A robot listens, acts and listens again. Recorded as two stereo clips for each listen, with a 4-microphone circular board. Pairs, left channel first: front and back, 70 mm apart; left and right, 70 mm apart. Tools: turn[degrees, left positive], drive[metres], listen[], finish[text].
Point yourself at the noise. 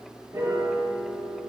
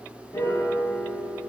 Thought: The piano: 135° left.
Action: turn[135]
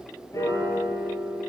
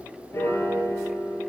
Thought: The piano is now 40° left.
Action: turn[40]
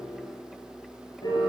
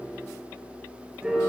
Thought: The piano is now 10° right.
Action: turn[-10]
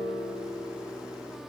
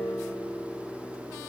Action: finish[Facing the piano, 2 to 4 m away.]